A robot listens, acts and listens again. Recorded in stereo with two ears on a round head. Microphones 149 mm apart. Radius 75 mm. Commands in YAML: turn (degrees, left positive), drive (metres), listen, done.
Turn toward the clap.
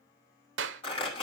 turn: -90
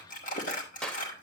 done: "Facing the clap, under 1 m away."